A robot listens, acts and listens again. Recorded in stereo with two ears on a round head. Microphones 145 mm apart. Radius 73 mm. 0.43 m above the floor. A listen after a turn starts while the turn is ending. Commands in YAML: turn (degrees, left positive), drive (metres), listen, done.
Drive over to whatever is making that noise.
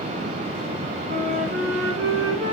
turn: -55
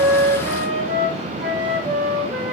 drive: 1.0
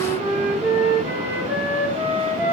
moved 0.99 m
turn: -10
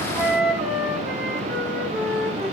drive: 1.0
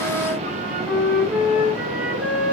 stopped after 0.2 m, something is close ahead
done: "Something is in my way. I am facing the flute but have not reached it."